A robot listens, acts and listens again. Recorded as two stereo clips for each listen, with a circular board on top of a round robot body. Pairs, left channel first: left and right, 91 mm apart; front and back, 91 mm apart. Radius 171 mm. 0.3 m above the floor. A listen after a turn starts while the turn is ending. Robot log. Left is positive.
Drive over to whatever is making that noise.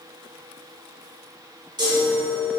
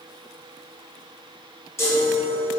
note: The chime: 60° right.
cmd yaw -60
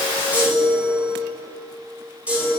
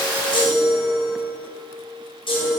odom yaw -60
note: The chime is now 15° right.
cmd yaw -15
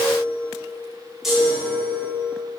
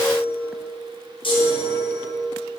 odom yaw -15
cmd fwd 1.0
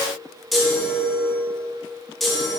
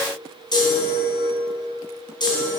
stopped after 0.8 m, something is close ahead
end: I am next to the chime.